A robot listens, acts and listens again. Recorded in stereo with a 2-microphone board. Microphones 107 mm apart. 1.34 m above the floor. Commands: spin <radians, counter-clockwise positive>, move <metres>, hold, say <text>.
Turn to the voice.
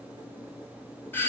hold
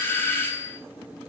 hold
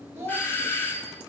spin -0.44
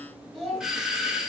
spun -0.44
say Facing the child speaking.